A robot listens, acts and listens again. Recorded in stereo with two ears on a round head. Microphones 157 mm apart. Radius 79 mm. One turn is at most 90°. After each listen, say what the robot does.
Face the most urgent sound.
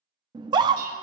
Turn 25° right.
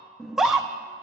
Facing the scream.